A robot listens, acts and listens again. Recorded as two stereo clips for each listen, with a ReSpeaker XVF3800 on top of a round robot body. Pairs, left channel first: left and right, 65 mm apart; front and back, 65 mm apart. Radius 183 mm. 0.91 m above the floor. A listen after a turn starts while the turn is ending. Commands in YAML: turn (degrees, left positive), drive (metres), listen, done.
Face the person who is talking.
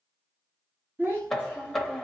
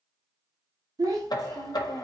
turn: -155
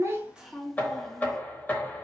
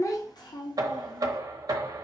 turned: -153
done: "Facing the child speaking, under 1 m away."